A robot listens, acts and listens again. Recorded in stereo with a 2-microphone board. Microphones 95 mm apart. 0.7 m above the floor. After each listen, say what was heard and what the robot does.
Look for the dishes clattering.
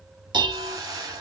The dishes clattering: about 55° right or 125° right. Turn 55° right.
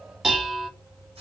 Facing the dishes clattering.